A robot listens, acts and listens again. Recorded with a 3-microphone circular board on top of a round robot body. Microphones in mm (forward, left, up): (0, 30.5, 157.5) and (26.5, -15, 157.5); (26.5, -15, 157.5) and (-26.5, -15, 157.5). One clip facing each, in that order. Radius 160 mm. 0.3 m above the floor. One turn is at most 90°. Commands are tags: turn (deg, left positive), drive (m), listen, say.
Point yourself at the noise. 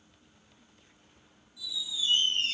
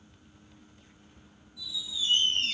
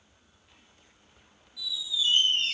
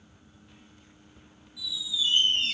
<turn deg="-90"/>
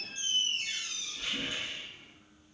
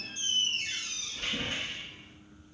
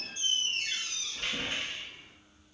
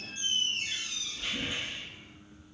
<turn deg="-30"/>
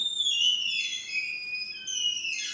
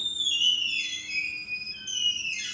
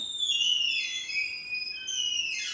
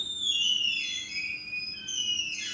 <say>Facing the squeak.</say>